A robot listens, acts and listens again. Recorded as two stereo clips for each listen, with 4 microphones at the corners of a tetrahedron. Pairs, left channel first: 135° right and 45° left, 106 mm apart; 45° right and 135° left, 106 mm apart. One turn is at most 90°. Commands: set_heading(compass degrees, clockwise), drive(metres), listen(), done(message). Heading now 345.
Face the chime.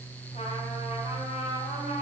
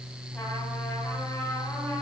listen()
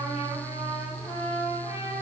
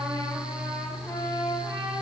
listen()
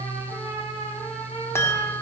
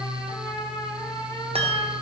set_heading(255)
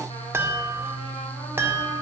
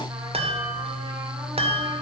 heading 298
set_heading(208)
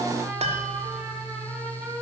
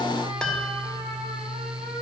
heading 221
set_heading(186)
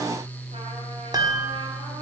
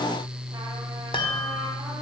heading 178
done("Found it: a chime, straight ahead, 1 to 2 m away.")